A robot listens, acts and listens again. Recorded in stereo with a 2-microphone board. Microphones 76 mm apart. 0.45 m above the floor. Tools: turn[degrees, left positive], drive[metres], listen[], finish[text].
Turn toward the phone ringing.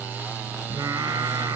Action: listen[]
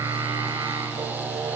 Action: listen[]
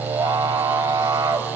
Action: finish[I can't make out a phone ringing, only singing.]